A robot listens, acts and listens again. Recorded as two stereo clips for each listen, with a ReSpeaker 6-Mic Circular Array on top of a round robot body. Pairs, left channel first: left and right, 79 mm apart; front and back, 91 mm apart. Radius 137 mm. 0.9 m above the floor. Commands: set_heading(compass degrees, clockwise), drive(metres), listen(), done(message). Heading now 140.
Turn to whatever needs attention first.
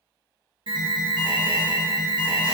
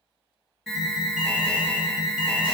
set_heading(220)
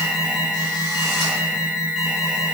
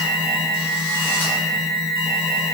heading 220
set_heading(230)
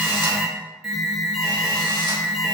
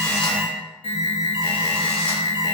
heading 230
done("Facing the alarm, 1 to 2 m away.")